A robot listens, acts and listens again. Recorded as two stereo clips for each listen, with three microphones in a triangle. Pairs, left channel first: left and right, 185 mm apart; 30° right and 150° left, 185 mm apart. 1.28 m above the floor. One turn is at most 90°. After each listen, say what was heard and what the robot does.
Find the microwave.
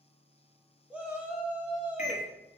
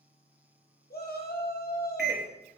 The microwave: 135° left. Turn 90° left.
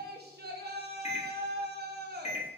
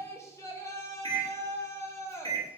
The microwave is now 35° left. Turn 35° left.
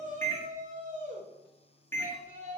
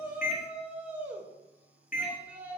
The microwave is now 10° left. Turn 10° left.
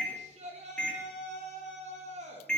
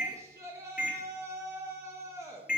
Found it: a microwave, straight ahead.